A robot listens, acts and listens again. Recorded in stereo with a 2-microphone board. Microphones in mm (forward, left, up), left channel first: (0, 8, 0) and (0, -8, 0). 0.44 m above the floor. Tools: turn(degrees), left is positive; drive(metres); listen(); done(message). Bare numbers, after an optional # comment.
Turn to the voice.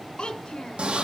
# The child speaking: about 65° left or 115° left.
turn(65)
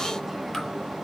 listen()
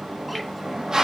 listen()
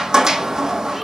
done("I heard a child speaking, but can't make it out now. It was about straight ahead or 50° left.")